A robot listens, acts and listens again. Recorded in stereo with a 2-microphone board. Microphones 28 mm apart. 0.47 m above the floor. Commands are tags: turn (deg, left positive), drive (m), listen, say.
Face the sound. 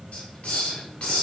<turn deg="55"/>
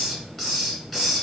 <say>Facing the hiss.</say>